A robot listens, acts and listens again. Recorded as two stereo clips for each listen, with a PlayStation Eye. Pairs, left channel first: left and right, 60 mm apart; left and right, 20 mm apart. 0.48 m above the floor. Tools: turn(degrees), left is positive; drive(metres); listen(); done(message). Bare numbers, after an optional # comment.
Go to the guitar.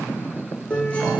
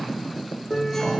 # The guitar: about 20° left or 160° left.
turn(20)
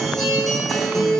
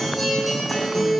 drive(1.0)
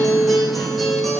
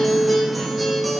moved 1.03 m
drive(1.0)
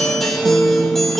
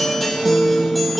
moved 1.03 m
drive(1.0)
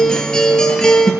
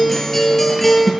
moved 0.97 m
# The guitar is now 10° left.
turn(10)
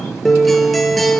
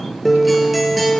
drive(1.0)
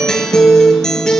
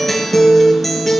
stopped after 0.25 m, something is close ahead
# The guitar is now 10° left.
turn(10)
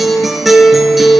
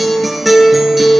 done("Arrived at the guitar, straight ahead.")